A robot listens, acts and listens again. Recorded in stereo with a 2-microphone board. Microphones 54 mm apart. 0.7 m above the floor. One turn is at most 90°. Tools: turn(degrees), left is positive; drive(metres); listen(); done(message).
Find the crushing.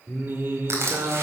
turn(degrees=-55)
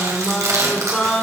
turn(degrees=-65)
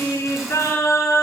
listen()
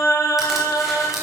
listen()
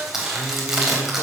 done("Found it: crushing, straight ahead.")